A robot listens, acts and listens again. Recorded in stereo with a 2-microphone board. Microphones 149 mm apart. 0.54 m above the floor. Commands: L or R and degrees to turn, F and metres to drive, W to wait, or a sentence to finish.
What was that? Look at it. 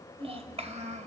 R50
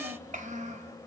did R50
R55
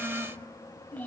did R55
L10
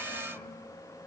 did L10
W
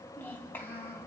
L15
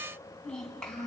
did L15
Found it: a child speaking, straight ahead, 2 to 4 m away.